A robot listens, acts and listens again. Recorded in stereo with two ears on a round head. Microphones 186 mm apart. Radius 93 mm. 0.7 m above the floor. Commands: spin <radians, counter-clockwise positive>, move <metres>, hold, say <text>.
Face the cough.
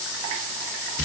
hold
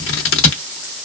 hold
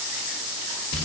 say I can't make out a cough, only scissors.